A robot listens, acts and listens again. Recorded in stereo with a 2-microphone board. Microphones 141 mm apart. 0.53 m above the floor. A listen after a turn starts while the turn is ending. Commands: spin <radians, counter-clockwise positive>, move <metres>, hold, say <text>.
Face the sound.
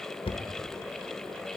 spin 0.70
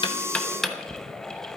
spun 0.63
say Facing the knocking.